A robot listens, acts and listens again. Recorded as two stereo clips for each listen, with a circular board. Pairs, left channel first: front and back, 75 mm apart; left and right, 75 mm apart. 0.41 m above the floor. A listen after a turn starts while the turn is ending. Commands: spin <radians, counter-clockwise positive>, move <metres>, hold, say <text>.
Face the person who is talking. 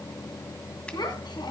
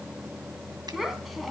say Facing the child speaking.